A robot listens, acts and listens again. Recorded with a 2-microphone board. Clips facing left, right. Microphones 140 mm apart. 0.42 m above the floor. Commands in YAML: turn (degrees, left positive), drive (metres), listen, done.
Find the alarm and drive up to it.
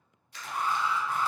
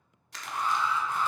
turn: 30
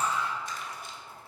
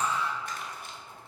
turn: 135
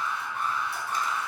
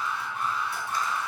turn: 55
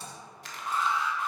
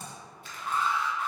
drive: 1.0
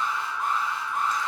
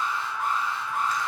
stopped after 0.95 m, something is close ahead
done: "Arrived at the alarm, straight ahead."